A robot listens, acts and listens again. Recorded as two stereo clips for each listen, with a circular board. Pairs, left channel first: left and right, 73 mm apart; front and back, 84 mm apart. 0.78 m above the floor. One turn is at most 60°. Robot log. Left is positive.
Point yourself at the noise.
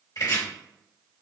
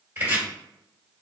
note: The chopping: 115° left.
cmd yaw +60
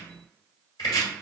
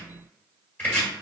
note: The chopping is now 70° left.
cmd yaw +60
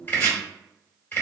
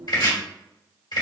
note: The chopping is now 30° left.
cmd yaw +30
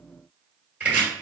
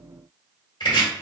note: The chopping is now 20° right.
cmd yaw -20
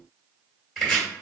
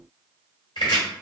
end: Facing the chopping, 1 to 2 m away.